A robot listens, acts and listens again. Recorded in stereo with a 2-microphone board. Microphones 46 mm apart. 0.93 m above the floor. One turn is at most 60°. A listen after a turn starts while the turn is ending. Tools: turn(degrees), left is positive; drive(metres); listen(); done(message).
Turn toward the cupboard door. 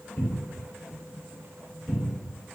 turn(degrees=35)
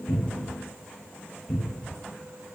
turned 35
done("Facing the cupboard door, 1 to 2 m away.")